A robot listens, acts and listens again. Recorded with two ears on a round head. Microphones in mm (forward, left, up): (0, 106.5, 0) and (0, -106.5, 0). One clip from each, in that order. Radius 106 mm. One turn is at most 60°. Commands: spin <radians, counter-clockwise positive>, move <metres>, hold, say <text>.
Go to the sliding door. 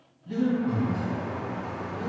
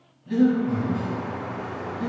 spin 0.44
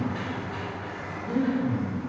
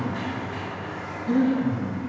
move 1.0
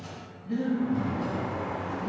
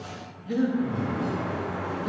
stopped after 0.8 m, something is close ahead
say Arrived at the sliding door, straight ahead.